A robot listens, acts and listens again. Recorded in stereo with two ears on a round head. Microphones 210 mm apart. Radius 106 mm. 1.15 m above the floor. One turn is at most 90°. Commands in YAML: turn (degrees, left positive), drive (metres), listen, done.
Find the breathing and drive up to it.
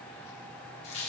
listen: true
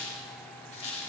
listen: true
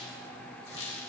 done: "I can't make out breathing, only a squeak."